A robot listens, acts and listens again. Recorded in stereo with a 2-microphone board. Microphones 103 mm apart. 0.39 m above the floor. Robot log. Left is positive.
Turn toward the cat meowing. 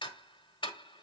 cmd idle
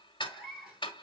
cmd yaw -30
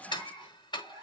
note: So it is at 145° right.
cmd yaw -145
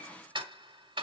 cmd idle
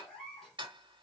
end: Found it: a cat meowing, straight ahead.